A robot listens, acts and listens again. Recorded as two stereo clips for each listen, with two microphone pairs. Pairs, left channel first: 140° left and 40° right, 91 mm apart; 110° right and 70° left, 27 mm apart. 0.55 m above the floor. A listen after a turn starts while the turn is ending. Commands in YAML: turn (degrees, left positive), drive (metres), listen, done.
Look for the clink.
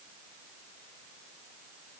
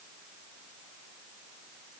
listen: true
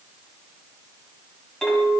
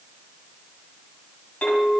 turn: -140
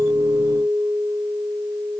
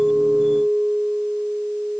turn: -10
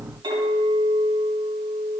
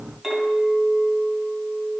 done: "Found it: a clink, straight ahead."